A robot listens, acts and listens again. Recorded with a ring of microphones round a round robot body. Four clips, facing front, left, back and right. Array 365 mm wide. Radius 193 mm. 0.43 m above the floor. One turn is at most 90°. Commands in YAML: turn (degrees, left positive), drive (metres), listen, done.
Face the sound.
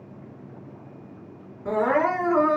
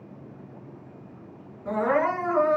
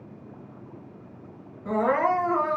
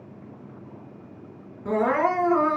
turn: -50
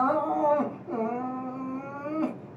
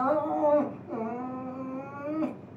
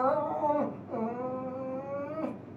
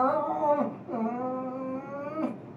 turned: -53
done: "Found it: crying, straight ahead."